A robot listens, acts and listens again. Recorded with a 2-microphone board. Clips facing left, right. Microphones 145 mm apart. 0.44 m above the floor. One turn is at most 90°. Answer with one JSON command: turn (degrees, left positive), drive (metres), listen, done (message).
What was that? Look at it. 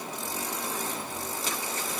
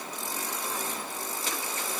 {"listen": true}
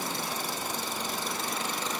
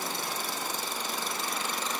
{"listen": true}
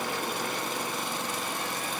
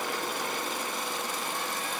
{"done": "I can't make out anything."}